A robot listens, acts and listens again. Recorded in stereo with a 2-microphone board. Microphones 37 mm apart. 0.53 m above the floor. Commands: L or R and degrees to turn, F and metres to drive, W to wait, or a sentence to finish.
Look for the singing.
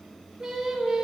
R30
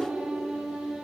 R145
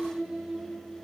R50
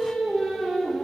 R15
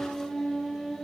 Found it: singing, straight ahead, over 4 m away.